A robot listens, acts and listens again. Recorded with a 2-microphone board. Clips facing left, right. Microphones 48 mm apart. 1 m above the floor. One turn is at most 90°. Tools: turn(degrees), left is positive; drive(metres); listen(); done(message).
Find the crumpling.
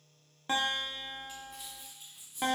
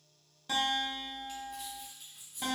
turn(degrees=30)
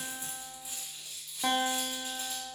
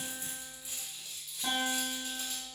turn(degrees=90)
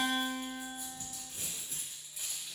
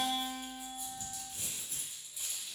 turn(degrees=90)
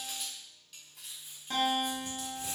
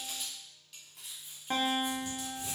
done("Facing the crumpling.")